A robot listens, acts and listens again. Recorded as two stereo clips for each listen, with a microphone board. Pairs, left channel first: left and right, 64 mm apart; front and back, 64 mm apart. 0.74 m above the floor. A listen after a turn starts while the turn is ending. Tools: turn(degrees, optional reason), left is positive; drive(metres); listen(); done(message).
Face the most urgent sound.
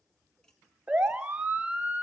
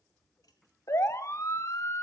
turn(degrees=-20, reason="The siren: 20° right.")
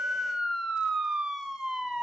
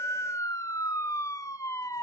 done("Facing the siren, 2 to 4 m away.")